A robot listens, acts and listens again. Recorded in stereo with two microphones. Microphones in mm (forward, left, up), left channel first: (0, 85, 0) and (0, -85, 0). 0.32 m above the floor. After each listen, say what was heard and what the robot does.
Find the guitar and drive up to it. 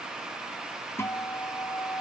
Turn 30° left.
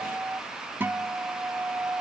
So it is at 15° right. Turn 15° right.
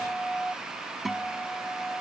Drive 1.0 m forward.
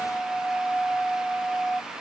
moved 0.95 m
Drive 1.0 m forward.
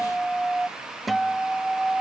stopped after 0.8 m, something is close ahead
I am next to the guitar.